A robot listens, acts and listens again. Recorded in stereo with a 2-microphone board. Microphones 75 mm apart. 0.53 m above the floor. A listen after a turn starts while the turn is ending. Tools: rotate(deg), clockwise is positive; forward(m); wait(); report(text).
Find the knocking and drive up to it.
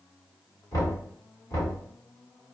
rotate(-50)
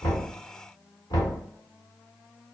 rotate(-75)
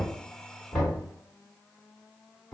rotate(-10)
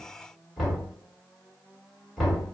forward(1.0)
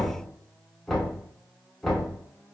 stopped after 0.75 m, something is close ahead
report("I am next to the knocking.")